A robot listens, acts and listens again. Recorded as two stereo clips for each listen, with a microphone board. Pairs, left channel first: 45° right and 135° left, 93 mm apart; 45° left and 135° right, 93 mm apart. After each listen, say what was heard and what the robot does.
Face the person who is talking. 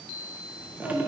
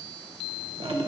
The child speaking: 70° right. Turn 70° right.
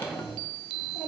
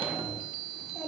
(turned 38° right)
The child speaking is now 45° right. Turn 45° right.
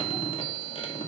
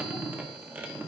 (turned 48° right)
Keep listening.
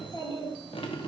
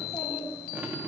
The child speaking is now 15° right. Turn 15° right.
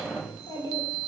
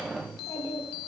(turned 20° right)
Facing the child speaking, 2 to 4 m away.